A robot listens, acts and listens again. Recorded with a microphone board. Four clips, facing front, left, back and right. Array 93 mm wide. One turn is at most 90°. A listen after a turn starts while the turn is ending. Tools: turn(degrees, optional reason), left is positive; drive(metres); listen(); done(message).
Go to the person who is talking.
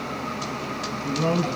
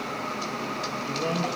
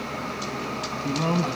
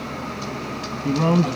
turn(degrees=-90, reason="The man speaking: 100° right.")
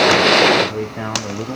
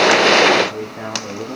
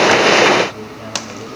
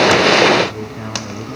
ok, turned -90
turn(degrees=10, reason="The man speaking is now 10° left.")
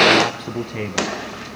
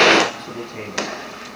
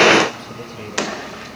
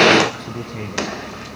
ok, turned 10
drive(metres=1.0)
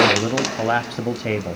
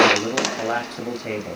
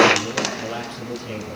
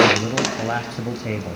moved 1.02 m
drive(metres=1.0)
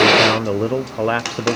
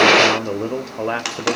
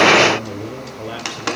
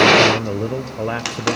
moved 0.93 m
turn(degrees=10, reason="The man speaking is now 10° left.")
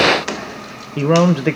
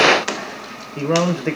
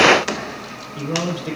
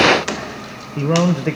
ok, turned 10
drive(metres=1.0)
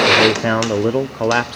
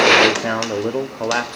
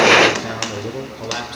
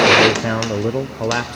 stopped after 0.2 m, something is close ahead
done("I am next to the man speaking.")